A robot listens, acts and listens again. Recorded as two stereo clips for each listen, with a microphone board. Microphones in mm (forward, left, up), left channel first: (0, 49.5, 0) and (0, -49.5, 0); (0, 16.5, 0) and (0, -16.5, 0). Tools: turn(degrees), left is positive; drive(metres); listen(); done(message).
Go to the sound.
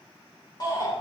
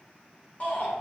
turn(degrees=45)
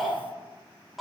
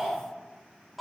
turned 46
drive(metres=1.0)
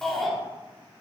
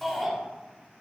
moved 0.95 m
drive(metres=1.0)
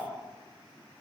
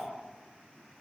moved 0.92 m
listen()
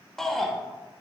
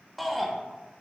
drive(metres=1.0)
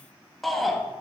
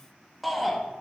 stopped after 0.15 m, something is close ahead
done("Arrived at the shout, straight ahead.")